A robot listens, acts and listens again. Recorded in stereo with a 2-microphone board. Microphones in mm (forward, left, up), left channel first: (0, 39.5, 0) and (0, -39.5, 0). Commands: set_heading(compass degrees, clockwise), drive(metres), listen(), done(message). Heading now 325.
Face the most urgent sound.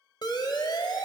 set_heading(260)
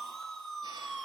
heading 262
done("Facing the siren, 2 to 4 m away.")